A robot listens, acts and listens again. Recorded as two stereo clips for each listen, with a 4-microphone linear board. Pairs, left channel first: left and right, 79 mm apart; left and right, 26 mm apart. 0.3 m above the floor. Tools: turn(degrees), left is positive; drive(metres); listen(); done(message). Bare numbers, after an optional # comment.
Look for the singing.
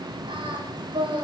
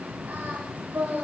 turn(-90)
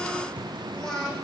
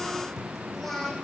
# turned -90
done("Facing the singing.")